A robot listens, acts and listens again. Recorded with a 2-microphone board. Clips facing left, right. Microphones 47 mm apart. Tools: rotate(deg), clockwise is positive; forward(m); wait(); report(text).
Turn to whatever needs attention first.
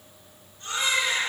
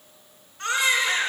rotate(90)
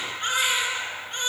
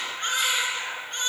report("Facing the baby crying.")